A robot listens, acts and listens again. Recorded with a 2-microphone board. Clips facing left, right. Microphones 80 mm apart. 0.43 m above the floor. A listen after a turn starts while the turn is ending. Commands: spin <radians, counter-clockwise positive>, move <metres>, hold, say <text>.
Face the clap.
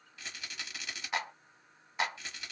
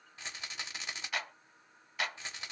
spin 0.44
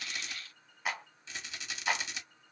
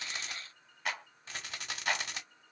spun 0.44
spin 0.17
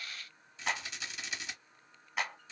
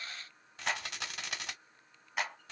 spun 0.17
say Facing the clap, 1 to 2 m away.